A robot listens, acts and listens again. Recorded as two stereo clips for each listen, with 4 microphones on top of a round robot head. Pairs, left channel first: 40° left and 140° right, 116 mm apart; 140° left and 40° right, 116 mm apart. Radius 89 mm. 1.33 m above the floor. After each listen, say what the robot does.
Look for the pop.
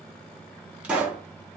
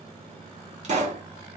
Turn 65° right.
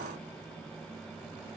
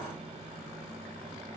Facing where the pop came from. I can't hear it now.